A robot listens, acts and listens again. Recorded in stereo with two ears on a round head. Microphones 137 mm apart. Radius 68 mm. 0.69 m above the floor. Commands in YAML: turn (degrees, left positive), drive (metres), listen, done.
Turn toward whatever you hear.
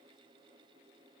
listen: true
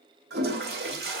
turn: -75
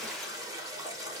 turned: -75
turn: -25
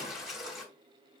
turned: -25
done: "Found it: a toilet flushing, straight ahead."